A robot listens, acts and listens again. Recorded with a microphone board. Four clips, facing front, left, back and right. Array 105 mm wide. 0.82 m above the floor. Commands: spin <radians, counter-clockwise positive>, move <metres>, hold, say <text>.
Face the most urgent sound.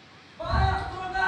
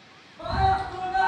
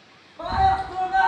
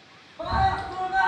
spin -2.79
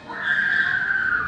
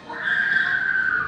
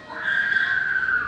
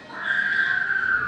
spin 0.61
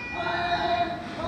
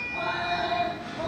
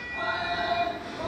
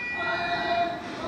say Facing the scream.